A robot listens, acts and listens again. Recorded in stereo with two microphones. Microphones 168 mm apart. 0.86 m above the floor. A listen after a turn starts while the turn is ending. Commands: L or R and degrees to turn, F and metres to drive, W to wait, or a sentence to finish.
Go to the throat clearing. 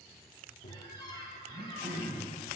R65
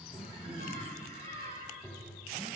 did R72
R35
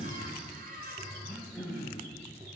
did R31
F1.0
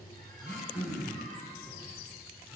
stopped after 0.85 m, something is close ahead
I am next to the throat clearing.